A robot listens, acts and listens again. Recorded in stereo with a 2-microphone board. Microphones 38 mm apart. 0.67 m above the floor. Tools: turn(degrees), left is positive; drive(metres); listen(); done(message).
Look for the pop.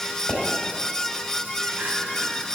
turn(degrees=50)
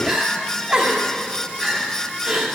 listen()
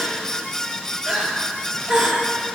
done("I heard a pop, but can't make it out now. It was about straight ahead or 80° left.")